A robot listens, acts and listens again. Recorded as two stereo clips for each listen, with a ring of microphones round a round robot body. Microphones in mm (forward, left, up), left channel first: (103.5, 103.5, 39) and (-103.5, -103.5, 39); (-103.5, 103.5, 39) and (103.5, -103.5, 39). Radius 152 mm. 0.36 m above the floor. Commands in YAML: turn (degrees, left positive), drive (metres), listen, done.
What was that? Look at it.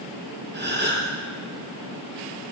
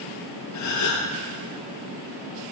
turn: 170
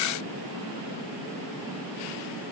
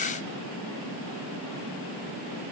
done: "Facing where the gasp came from. I can't hear it now."